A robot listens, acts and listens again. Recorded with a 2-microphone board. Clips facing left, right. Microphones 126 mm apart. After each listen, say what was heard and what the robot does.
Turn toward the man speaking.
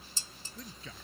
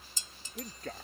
The man speaking: about 55° right or 125° right. Turn 55° right.
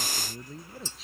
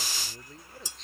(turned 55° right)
Facing the man speaking.